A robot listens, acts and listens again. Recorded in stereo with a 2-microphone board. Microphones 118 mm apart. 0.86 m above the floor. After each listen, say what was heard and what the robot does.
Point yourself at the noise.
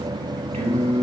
The singing: about 65° right or 115° right. Turn 65° right.
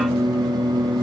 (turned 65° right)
Found it: singing, straight ahead.